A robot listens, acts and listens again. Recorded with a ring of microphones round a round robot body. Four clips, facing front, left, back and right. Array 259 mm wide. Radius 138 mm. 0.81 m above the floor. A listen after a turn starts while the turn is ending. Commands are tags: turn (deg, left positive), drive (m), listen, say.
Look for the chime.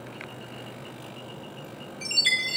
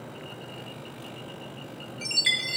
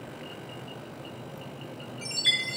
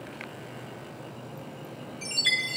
<turn deg="45"/>
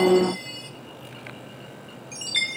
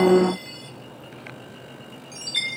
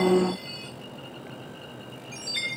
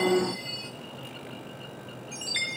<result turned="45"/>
<say>Found it: a chime, straight ahead.</say>